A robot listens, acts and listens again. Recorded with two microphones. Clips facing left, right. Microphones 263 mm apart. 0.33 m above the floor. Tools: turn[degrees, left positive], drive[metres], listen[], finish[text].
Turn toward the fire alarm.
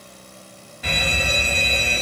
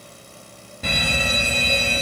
Thought: The fire alarm: about 50° right or 130° right.
Action: turn[-50]
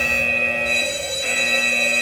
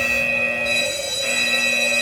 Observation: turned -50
Thought: So it is at 65° right.
Action: turn[-65]
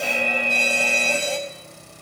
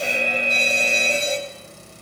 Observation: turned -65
Thought: The fire alarm is now 25° right.
Action: turn[-25]
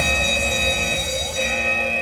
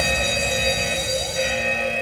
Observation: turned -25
Action: finish[Found it: a fire alarm, straight ahead.]